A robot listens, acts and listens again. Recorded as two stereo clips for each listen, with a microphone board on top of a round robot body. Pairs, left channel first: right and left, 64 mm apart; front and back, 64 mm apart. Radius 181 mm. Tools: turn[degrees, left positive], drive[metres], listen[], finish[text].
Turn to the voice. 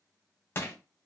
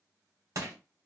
Action: listen[]
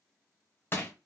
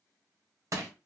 Action: listen[]
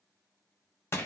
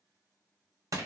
Action: finish[I can't make out anyone speaking to turn to.]